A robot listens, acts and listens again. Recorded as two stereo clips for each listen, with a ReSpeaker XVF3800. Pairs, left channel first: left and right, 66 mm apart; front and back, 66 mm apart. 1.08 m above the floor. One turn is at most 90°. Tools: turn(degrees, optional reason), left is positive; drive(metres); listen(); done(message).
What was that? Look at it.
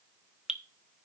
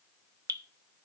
turn(degrees=-90, reason="The dripping: 170° right.")
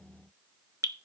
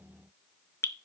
turn(degrees=-50, reason="The dripping is now 50° right.")
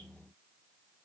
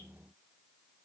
listen()
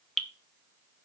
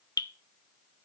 done("Found it: dripping, straight ahead.")